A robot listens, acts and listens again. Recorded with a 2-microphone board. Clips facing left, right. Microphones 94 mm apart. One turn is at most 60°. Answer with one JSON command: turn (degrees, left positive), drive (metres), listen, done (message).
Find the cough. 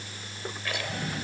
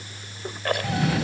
{"turn": -60}
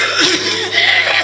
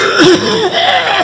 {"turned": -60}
{"turn": -40}
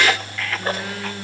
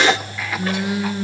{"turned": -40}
{"turn": -10}
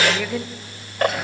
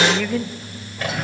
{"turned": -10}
{"done": "Facing the cough."}